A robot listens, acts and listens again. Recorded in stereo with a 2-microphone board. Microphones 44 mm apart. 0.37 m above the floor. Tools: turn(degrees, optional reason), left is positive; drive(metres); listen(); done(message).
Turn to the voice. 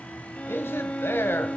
turn(degrees=60, reason="The man speaking: about 60° left or 120° left.")
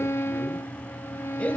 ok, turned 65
listen()
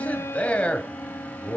turn(degrees=35, reason="So it is at 35° left.")
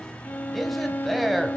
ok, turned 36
done("Found it: a man speaking, straight ahead, 1 to 2 m away.")